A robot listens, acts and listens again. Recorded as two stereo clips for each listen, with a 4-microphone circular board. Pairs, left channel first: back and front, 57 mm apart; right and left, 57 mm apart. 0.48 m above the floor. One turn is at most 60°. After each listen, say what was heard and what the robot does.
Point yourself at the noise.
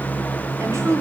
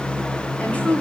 The woman speaking: 30° right. Turn 30° right.
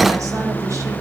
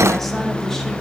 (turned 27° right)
Keep listening.
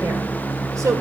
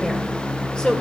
The woman speaking is now 20° right. Turn 20° right.
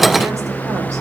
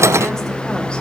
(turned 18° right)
Keep listening.
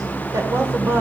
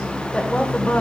The woman speaking is now 35° right. Turn 35° right.
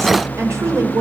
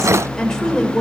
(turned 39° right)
The woman speaking is now 20° right. Turn 20° right.
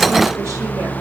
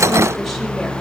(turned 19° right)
Keep listening.
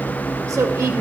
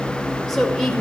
The woman speaking is now 10° right. Turn 10° right.
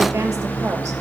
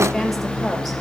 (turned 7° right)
Keep listening.
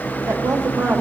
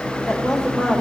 Facing the woman speaking, 1 to 2 m away.